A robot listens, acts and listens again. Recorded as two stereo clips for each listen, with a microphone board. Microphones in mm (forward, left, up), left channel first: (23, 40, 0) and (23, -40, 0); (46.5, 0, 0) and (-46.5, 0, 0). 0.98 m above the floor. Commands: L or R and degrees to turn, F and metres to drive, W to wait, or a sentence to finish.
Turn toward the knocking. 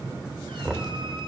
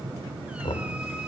R10
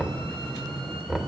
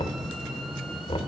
Found it: knocking, straight ahead.